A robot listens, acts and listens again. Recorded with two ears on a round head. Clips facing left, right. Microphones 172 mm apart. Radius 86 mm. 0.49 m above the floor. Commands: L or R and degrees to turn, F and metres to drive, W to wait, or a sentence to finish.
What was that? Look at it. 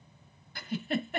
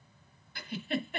L35
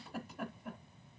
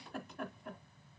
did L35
Found it: a giggle, straight ahead.